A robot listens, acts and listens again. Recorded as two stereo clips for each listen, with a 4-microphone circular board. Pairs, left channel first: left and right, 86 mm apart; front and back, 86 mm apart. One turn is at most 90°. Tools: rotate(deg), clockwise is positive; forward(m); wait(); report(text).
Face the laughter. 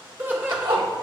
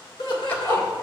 rotate(20)
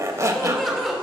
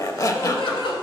report("Facing the laughter, 2 to 4 m away.")